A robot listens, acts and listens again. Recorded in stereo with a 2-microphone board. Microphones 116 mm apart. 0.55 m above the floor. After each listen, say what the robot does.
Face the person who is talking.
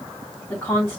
Turn 20° left.
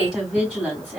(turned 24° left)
Found it: a woman speaking, straight ahead.